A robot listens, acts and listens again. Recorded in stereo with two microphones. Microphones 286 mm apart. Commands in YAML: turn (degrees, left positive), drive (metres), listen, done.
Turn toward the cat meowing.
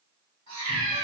turn: -70
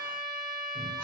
listen: true
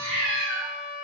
turn: -30
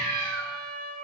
turn: -35
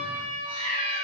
turn: -20
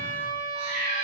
done: "Facing the cat meowing."